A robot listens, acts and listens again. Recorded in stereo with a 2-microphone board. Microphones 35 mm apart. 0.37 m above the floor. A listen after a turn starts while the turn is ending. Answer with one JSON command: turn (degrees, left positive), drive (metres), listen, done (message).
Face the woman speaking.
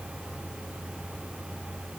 {"listen": true}
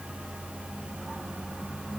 {"listen": true}
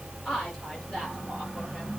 {"turn": 15}
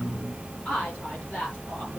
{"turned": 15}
{"turn": 30}
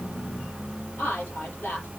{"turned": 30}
{"turn": 120}
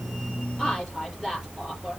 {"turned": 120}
{"done": "Facing the woman speaking."}